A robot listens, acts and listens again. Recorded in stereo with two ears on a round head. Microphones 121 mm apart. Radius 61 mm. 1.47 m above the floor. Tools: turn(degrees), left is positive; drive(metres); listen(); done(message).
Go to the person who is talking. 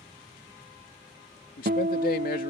turn(degrees=70)
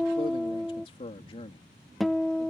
turn(degrees=40)
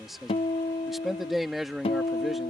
drive(metres=1.0)
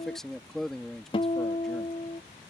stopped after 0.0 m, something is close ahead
done("Blocked. The man speaking is further on, straight ahead.")